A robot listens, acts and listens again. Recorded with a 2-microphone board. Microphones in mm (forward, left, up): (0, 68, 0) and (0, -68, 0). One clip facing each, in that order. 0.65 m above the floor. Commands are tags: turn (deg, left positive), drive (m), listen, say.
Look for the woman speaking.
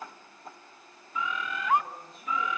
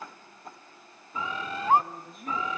<turn deg="-50"/>
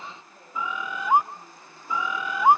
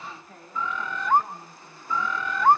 <turn deg="-80"/>
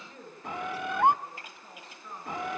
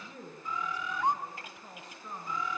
<turn deg="-15"/>
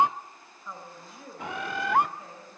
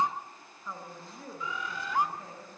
<say>Facing the woman speaking.</say>